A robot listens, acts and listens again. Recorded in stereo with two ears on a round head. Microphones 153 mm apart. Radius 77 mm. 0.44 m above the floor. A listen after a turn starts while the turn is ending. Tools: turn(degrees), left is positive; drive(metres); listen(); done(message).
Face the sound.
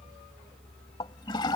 turn(degrees=25)
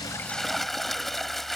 done("Facing the toilet flushing.")